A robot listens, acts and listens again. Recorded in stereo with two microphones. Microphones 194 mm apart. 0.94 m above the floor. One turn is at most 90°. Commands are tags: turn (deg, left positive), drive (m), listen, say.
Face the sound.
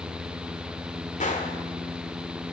<turn deg="40"/>
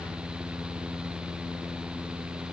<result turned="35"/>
<listen/>
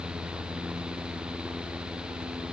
<say>I heard a gunshot, but can't make it out now. It was about 5° left or 105° left.</say>